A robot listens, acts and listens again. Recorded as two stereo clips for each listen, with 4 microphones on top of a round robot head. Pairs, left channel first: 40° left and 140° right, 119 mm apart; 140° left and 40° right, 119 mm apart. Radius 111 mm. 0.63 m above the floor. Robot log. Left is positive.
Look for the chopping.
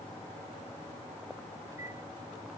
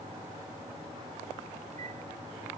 cmd idle
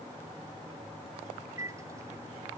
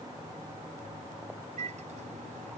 cmd idle
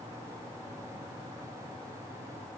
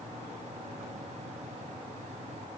end: I can't make out chopping to turn to.